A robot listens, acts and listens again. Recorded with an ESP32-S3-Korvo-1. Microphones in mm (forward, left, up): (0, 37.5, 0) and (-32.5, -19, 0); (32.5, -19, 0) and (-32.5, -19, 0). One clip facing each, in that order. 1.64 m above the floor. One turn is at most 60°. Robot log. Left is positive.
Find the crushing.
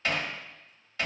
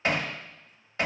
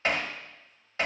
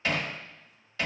cmd idle
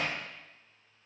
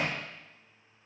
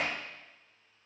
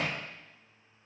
cmd idle
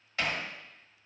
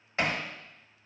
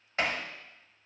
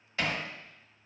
end: I can't make out crushing to turn to.